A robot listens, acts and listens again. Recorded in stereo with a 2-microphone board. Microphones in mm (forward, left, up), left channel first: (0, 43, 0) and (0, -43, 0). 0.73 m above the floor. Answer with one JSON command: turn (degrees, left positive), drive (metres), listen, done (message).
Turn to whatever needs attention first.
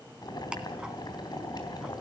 {"listen": true}
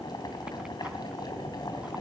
{"listen": true}
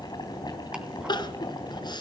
{"turn": 60}
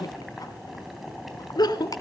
{"turn": 55}
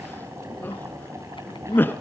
{"turn": 25}
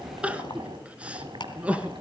{"turn": -15}
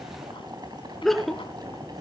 {"done": "Facing the crying."}